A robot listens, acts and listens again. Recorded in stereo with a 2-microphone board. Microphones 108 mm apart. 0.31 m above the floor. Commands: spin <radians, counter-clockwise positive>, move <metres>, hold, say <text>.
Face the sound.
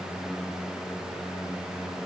hold
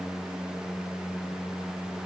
hold
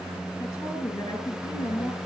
spin 0.61
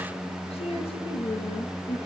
spin 1.92
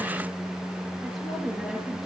say Facing the woman speaking, over 4 m away.